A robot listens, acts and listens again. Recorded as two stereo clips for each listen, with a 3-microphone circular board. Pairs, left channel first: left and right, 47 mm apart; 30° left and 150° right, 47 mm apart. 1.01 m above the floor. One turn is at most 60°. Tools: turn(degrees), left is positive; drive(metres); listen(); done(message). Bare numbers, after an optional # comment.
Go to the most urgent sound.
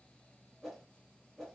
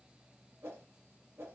listen()
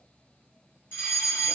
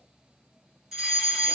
# The fire alarm: 130° left.
turn(60)
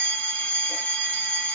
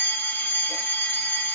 # The fire alarm is now 70° left.
turn(60)
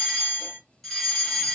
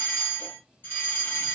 # The fire alarm is now 10° left.
turn(10)
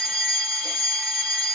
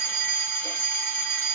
drive(1.0)
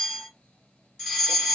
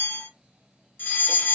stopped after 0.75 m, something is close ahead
done("Arrived at the fire alarm, straight ahead.")